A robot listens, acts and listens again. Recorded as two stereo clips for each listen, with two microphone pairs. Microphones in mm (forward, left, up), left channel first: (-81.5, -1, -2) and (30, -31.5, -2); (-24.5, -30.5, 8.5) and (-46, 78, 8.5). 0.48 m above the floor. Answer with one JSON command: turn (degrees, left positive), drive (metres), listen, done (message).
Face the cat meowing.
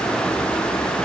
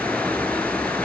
{"listen": true}
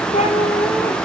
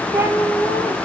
{"turn": 170}
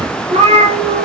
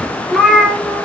{"turn": 15}
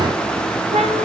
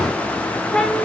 {"done": "Facing the cat meowing, 2 to 4 m away."}